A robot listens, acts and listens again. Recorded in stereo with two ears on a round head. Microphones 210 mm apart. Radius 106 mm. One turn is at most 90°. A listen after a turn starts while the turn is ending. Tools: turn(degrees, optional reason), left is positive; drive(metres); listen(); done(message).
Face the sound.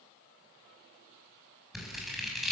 turn(degrees=30)
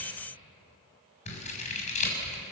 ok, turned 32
turn(degrees=90, reason="So it is at 150° left.")
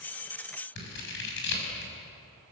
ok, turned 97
turn(degrees=50, reason="The scissors is now 50° left.")
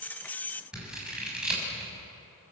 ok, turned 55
done("Found it: scissors, straight ahead, over 4 m away.")